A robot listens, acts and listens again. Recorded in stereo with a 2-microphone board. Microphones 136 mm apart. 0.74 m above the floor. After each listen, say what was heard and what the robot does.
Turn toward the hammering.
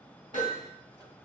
Turn 90° right.
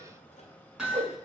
Facing the hammering, over 4 m away.